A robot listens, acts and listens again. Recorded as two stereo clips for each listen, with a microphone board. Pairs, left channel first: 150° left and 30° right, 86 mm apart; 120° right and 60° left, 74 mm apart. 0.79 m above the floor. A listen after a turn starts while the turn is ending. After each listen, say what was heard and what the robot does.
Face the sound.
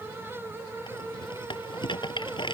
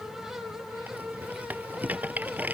The rattle: 125° left. Turn 125° left.
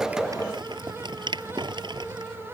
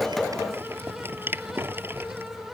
Facing the rattle.